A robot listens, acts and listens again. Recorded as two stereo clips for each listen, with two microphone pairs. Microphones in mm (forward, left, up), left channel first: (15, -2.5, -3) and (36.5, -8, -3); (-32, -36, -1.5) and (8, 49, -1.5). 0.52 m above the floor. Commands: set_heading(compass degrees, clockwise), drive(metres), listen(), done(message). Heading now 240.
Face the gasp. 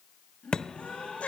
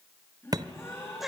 set_heading(55)
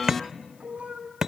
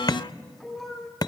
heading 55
done("I heard a gasp from this way, but can't make it out now.")